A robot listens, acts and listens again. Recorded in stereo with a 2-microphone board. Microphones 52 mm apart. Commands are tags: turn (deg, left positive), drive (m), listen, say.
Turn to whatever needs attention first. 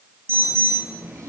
<turn deg="-45"/>
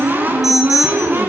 <say>Found it: an alarm, straight ahead, over 4 m away.</say>